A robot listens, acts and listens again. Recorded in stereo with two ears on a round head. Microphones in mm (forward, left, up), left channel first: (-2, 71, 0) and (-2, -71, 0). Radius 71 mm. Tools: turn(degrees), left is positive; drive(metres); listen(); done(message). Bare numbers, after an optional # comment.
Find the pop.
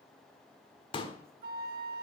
# The pop: about 30° left or 150° left.
turn(30)
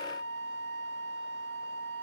listen()
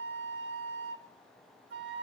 done("I heard a pop, but can't make it out now. It was about straight ahead or 120° left.")